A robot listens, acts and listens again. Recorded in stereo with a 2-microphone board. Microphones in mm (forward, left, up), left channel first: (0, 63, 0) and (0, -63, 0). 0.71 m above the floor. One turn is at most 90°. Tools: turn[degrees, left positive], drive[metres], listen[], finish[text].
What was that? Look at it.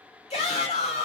Thought: The shout: about 60° left or 120° left.
Action: turn[60]
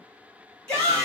Action: finish[Facing the shout, 2 to 4 m away.]